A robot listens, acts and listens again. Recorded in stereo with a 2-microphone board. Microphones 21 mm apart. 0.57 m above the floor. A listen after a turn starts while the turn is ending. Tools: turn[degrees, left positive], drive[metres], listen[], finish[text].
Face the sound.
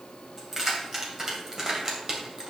Thought: The keys jangling: about 35° right or 145° right.
Action: turn[-35]
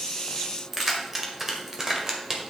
Thought: The keys jangling: about 30° right or 150° right.
Action: turn[-30]
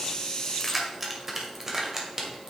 Thought: The keys jangling: about 30° right or 150° right.
Action: turn[-30]
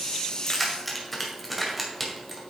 Action: finish[Found it: keys jangling, straight ahead.]